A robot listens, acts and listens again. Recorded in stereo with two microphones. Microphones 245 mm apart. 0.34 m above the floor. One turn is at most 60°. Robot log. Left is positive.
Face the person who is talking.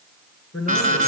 note: The man speaking: about 70° left or 110° left.
cmd yaw +60
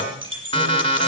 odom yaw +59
cmd idle
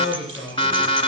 note: So it is at 20° left.
cmd yaw +20
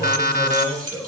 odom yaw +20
end: Facing the man speaking, over 4 m away.